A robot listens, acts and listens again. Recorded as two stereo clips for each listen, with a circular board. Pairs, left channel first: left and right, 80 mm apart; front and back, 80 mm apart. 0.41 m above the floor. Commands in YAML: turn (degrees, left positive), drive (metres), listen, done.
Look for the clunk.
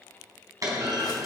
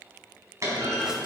turn: -130
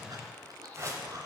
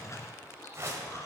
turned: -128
done: "I heard a clunk from this way, but can't make it out now."